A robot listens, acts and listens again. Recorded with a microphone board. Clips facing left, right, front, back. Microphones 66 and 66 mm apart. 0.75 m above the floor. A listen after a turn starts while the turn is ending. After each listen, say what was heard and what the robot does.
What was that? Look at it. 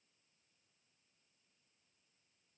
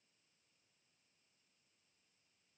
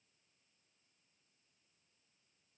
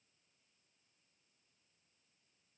Keep listening.
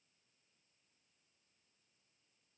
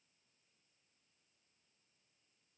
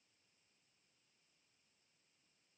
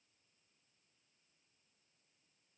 Keep listening.
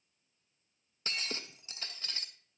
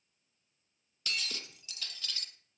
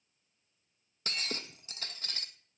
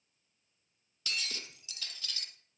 The breaking glass: 35° left. Turn 35° left.
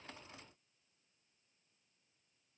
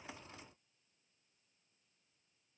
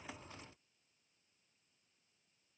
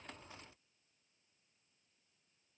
I heard breaking glass from this way, but can't make it out now.